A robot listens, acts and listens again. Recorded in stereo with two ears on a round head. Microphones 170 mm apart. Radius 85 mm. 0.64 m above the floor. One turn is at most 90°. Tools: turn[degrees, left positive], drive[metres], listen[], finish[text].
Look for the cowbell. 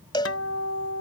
Thought: The cowbell: about 25° left or 155° left.
Action: turn[25]
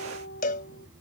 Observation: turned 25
Thought: So it is at 130° left.
Action: turn[90]
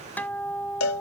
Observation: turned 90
Thought: The cowbell is now 80° left.
Action: turn[80]
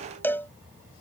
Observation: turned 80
Thought: The cowbell is now 10° left.
Action: turn[10]
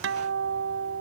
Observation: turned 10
Action: listen[]
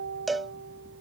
Action: finish[Facing the cowbell.]